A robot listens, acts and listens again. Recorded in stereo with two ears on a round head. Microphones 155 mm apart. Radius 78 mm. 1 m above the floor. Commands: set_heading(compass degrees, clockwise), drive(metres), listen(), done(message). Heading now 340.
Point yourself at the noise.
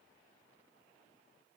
listen()
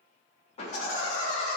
set_heading(295)
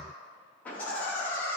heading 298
set_heading(283)
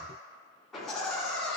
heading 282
done("Facing the laughter, 2 to 4 m away.")